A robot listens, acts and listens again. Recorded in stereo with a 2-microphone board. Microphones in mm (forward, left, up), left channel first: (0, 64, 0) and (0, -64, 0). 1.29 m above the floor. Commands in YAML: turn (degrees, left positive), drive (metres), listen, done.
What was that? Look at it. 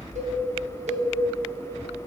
turn: -65
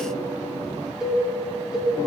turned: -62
done: "Found it: a cowbell, straight ahead."